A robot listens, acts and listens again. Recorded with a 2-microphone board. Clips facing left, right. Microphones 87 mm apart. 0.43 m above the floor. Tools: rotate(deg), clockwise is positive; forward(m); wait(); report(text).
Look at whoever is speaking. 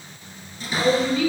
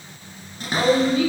rotate(50)
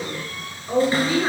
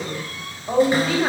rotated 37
rotate(90)
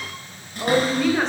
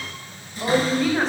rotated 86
report("Facing the woman speaking.")